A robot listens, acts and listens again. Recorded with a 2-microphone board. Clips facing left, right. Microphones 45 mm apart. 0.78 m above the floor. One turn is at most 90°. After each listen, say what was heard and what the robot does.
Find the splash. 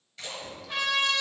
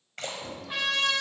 The splash: about 55° right or 125° right. Turn 55° right.
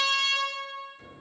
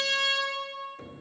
Keep listening.
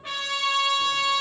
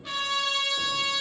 I heard a splash, but can't make it out now. It was about straight ahead or 70° right.